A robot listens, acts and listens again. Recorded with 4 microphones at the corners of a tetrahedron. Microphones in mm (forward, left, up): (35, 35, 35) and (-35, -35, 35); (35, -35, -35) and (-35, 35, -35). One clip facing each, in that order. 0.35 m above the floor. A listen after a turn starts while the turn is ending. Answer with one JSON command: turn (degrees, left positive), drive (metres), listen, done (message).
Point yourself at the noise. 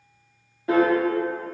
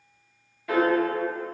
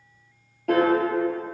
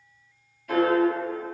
{"turn": -15}
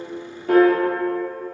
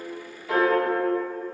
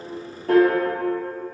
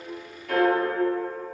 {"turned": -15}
{"done": "Facing the piano, 1 to 2 m away."}